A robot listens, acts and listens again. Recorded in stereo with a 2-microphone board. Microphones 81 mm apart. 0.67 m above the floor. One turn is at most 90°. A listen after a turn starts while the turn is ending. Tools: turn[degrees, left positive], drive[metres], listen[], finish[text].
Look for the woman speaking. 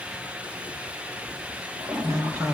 Thought: The woman speaking: about 40° right or 140° right.
Action: turn[-40]
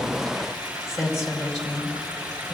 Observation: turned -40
Action: finish[Found it: a woman speaking, straight ahead.]